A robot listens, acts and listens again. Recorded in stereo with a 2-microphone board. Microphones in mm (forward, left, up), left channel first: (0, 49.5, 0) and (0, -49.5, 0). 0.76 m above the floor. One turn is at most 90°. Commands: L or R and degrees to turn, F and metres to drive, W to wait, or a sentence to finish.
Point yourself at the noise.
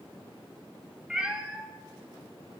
R30
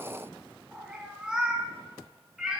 R30
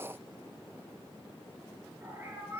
R90
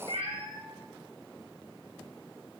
R70
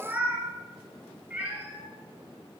R15
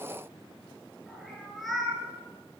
Facing the cat meowing.